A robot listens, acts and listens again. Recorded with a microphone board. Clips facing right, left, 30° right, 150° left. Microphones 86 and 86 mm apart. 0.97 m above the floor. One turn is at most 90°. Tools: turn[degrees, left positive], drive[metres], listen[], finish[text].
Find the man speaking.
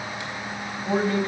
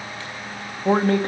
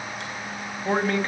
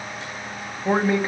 Thought: The man speaking: 70° left.
Action: turn[70]
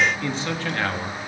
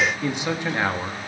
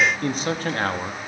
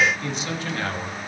Thought: The man speaking is now 15° left.
Action: turn[15]
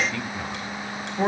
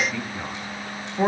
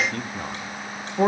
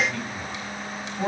Thought: The man speaking is now 10° left.
Action: turn[10]
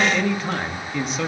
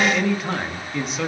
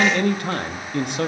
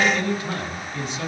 Action: finish[Found it: a man speaking, straight ahead, 1 to 2 m away.]